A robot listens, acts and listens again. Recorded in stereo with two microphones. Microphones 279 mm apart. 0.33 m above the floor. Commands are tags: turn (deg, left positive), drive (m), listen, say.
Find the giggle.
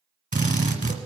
<listen/>
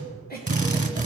<turn deg="35"/>
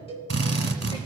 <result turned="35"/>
<listen/>
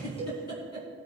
<turn deg="110"/>
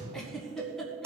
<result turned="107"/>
<say>Facing the giggle.</say>